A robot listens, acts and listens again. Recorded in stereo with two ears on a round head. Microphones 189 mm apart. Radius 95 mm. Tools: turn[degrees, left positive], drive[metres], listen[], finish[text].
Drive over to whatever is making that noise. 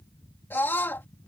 Action: turn[30]
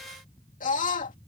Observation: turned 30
Thought: So it is at 140° left.
Action: turn[140]
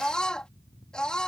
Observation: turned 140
Action: drive[1.0]
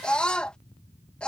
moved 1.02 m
Action: drive[1.0]
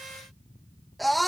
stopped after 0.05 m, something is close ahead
Action: finish[Arrived at the scream, straight ahead.]